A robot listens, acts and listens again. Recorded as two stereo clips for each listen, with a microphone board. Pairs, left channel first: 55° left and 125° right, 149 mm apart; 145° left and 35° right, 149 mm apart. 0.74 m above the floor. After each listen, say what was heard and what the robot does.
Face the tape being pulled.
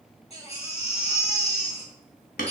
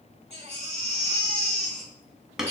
Keep listening.
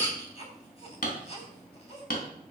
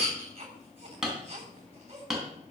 Keep listening.
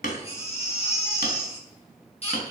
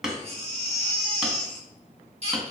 I can't make out tape being pulled, only hammering and a baby crying.